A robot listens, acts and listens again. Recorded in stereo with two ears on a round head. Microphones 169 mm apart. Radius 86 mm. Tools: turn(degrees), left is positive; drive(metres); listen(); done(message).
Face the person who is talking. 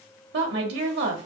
turn(degrees=-70)
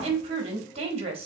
turn(degrees=-35)
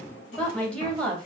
done("Facing the woman speaking.")